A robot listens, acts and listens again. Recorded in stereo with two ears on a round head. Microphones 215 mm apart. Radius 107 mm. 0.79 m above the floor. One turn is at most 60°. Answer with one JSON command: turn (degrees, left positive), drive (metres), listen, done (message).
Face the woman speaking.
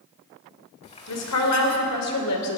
{"turn": 60}
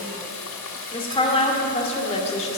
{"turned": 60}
{"turn": 30}
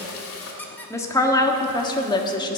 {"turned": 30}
{"turn": 20}
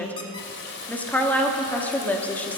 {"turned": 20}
{"done": "Found it: a woman speaking, straight ahead."}